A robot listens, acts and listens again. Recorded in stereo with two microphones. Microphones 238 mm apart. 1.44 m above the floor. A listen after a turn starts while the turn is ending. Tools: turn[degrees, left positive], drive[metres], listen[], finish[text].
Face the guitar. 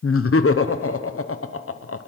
Action: listen[]
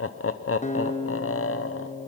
Thought: The guitar: about 30° left or 150° left.
Action: turn[30]
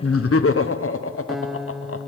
Action: finish[Found it: a guitar, straight ahead, under 1 m away.]